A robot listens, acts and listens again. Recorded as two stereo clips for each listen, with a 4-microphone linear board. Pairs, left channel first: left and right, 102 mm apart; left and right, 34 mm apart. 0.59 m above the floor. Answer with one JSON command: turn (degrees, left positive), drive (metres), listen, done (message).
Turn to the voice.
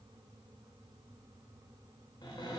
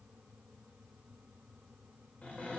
{"listen": true}
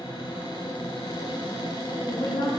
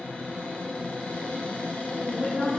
{"turn": 40}
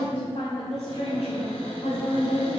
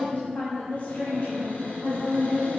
{"turn": 115}
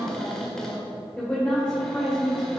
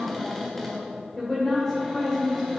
{"turn": 15}
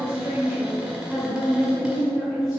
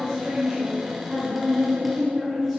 {"done": "Facing the woman speaking."}